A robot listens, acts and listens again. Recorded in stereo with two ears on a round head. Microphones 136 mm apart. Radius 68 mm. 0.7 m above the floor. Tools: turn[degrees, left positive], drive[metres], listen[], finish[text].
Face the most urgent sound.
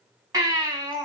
Thought: The baby crying: about 25° right or 155° right.
Action: turn[-25]
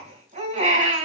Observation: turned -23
Thought: So it is at 135° right.
Action: turn[-135]
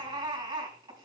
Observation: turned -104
Thought: The baby crying is now 30° right.
Action: turn[-30]
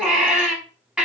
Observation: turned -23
Action: finish[Found it: a baby crying, straight ahead, over 4 m away.]